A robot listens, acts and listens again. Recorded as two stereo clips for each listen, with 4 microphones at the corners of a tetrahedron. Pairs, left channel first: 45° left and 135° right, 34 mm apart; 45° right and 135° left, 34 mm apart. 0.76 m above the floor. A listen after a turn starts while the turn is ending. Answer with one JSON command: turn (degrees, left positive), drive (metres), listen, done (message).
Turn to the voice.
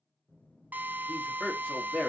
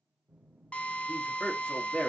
{"done": "Facing the man speaking."}